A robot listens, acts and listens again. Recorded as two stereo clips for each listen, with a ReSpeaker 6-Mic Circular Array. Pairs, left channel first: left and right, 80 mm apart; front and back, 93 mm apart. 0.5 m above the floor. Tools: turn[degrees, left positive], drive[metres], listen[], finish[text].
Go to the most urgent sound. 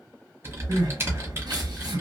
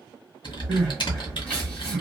Thought: The crying: 75° right.
Action: turn[-75]
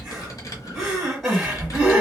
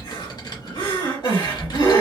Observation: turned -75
Action: drive[1.0]
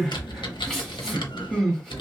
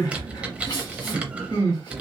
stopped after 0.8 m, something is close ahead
Action: finish[I am next to the crying.]